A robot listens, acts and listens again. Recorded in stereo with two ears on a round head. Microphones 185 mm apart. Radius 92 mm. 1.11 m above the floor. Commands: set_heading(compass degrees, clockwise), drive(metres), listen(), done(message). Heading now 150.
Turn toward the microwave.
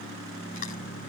listen()
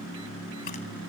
listen()
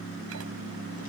done("I can't make out a microwave.")